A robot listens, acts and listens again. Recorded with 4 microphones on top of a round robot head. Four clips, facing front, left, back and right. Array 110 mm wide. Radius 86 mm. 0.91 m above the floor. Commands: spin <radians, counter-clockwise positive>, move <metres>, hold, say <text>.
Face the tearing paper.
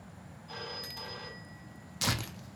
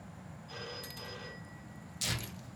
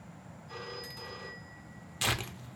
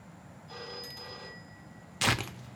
spin -1.31
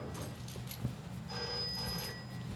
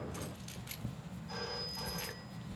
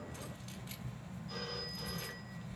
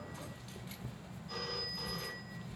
say Facing the tearing paper.